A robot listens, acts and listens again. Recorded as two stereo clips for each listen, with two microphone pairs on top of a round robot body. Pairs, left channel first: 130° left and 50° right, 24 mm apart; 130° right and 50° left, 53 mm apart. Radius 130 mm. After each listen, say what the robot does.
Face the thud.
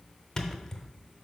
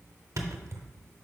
Turn 60° left.
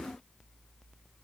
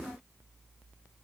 Facing where the thud came from. I can't hear it now.